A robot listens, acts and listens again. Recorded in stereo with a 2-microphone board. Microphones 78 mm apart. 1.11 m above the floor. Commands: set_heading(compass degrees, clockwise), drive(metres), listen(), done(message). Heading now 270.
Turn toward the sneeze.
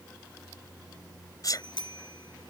set_heading(220)
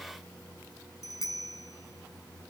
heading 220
listen()
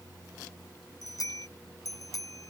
done("I heard a sneeze, but can't make it out now. It was about straight ahead or 80° left.")